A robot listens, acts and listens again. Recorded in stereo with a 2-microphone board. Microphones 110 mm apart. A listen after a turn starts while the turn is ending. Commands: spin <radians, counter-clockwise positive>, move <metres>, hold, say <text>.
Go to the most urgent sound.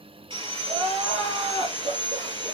spin -1.57
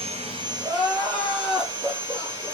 move 1.0
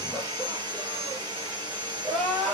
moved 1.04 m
move 1.0
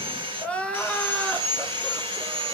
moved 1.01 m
spin 0.26
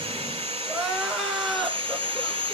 move 1.0
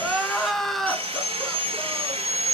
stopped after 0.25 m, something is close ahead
say I am next to the crying.